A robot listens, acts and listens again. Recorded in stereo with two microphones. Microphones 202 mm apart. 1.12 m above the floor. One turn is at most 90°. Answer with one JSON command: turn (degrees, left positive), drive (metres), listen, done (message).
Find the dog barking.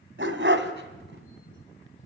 {"turn": -75}
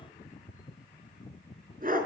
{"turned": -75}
{"turn": -45}
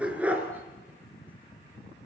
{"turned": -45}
{"done": "Facing the dog barking, over 4 m away."}